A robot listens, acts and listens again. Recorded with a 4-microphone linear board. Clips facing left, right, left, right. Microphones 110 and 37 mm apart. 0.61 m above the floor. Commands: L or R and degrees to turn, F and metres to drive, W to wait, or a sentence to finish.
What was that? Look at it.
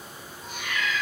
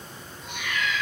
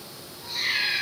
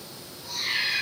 L40
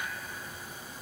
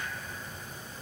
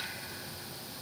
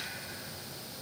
W
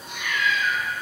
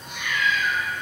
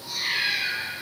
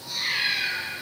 Facing the cat meowing, 1 to 2 m away.